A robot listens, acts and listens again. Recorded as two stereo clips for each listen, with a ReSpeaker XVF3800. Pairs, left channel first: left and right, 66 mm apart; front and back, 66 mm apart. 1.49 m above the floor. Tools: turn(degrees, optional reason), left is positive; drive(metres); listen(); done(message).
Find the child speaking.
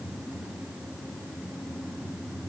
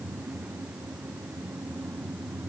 listen()
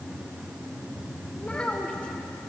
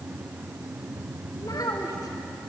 turn(degrees=15, reason="The child speaking: 15° left.")
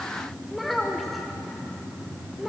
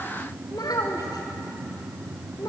done("Found it: a child speaking, straight ahead.")